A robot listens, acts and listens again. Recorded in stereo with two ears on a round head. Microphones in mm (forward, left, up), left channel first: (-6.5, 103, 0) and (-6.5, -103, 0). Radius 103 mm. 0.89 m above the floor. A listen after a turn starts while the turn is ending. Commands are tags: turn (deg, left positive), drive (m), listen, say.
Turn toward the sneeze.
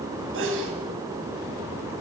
<turn deg="-60"/>
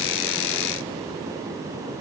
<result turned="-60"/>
<listen/>
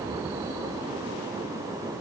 <say>I heard a sneeze, but can't make it out now. It was about straight ahead or 60° right.</say>